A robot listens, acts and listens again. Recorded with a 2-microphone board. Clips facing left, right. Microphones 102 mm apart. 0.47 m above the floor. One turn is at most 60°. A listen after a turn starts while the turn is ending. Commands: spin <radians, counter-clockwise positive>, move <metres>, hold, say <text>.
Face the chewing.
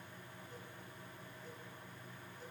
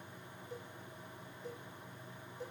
hold
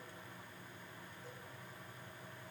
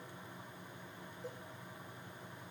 hold
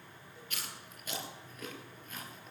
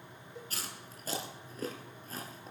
spin -0.61
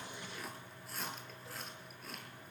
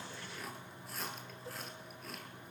say Facing the chewing.